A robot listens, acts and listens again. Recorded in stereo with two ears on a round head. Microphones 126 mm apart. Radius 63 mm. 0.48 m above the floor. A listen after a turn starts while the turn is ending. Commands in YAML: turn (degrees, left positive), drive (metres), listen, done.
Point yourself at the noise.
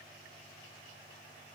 listen: true
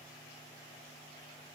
listen: true
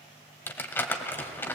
turn: 30
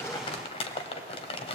turn: 135
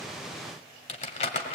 turn: 50
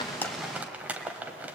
turn: -10
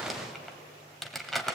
done: "Facing the crumpling, 1 to 2 m away."